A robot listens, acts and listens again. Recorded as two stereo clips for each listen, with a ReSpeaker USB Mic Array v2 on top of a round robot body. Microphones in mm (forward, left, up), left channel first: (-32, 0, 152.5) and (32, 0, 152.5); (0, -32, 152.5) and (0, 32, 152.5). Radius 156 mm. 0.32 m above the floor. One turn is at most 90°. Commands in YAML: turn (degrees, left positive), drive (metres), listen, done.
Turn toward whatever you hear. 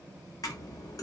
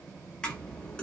turn: -90
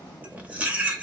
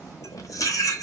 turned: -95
turn: -70
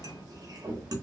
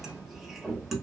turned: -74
done: "Facing the cutlery clinking, under 1 m away."